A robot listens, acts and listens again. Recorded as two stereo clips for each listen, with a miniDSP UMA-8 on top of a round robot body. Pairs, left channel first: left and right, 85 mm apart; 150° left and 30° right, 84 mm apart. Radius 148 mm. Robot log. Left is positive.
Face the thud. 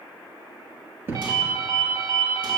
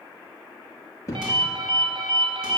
note: The thud: 155° right.
cmd yaw -155
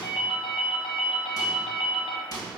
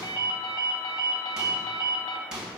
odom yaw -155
end: Facing where the thud came from. I can't hear it now.